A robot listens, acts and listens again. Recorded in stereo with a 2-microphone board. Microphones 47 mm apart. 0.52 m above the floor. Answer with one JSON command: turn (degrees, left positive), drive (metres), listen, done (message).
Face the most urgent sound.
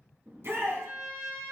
{"turn": -65}
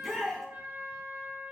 {"done": "Found it: a shout, straight ahead, over 4 m away."}